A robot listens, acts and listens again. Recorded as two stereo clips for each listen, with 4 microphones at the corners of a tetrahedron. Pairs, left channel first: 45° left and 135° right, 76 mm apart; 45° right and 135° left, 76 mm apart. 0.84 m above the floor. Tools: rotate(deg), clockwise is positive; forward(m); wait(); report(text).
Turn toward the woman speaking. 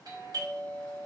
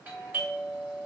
wait()
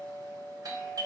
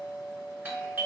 wait()
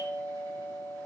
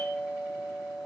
report("I can't make out a woman speaking to turn to.")